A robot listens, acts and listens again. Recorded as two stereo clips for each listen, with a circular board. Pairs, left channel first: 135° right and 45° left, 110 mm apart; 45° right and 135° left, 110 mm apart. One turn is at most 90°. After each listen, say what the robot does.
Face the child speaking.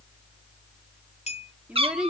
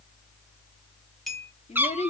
Turn 40° right.
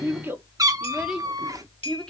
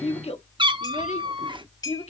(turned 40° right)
Turn 50° right.
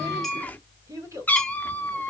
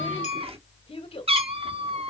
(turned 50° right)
Turn 15° right.
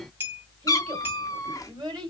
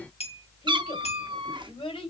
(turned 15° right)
Found it: a child speaking, straight ahead, 2 to 4 m away.